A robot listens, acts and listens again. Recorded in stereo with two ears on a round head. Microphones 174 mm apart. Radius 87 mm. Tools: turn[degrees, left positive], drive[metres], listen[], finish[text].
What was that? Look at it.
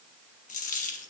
Thought: The dropped coin: about 40° left or 140° left.
Action: turn[40]
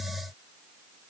Action: listen[]
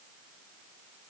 Action: finish[I heard a dropped coin, but can't make it out now. It was about straight ahead or 100° left.]